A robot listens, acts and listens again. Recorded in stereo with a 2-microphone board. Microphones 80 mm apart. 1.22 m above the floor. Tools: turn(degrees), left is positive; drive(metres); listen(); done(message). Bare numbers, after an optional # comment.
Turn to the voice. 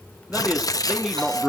turn(-30)
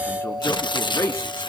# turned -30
# So it is at 35° left.
turn(35)
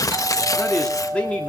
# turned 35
# The man speaking is now 15° left.
turn(15)
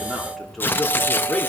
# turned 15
done("Found it: a man speaking, straight ahead.")